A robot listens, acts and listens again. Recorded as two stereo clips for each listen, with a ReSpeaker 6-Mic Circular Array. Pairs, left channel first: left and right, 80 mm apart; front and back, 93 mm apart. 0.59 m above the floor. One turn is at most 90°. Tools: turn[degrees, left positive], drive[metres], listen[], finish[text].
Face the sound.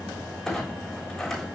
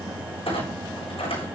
Action: finish[Found it: a clunk, straight ahead, over 4 m away.]